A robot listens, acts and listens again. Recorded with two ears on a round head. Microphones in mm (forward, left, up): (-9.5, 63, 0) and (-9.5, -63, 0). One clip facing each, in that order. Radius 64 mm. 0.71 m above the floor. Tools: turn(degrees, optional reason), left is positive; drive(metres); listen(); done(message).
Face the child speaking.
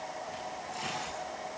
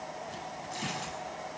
listen()
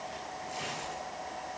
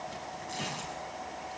listen()
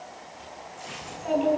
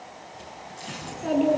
turn(degrees=-55, reason="The child speaking: about 55° right or 125° right.")
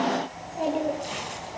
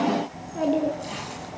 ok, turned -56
turn(degrees=-75, reason="So it is at 75° right.")
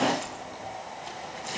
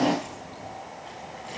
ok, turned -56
turn(degrees=-20, reason="The child speaking is now 20° right.")
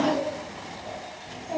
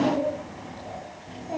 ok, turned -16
done("Found it: a child speaking, straight ahead.")